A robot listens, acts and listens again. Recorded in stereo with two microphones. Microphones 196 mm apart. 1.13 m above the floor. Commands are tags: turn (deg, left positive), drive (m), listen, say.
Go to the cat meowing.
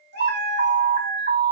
<turn deg="-60"/>
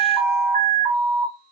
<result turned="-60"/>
<listen/>
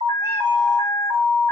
<listen/>
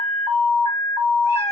<say>I heard a cat meowing, but can't make it out now. It was about straight ahead or 60° right. I did not reach it.</say>